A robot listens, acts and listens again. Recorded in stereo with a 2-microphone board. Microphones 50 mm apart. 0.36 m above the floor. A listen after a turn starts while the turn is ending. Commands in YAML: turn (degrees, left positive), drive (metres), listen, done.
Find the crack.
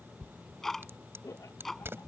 turn: -55
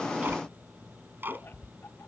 listen: true
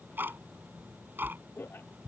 done: "I heard a crack, but can't make it out now. It was about straight ahead or 70° right."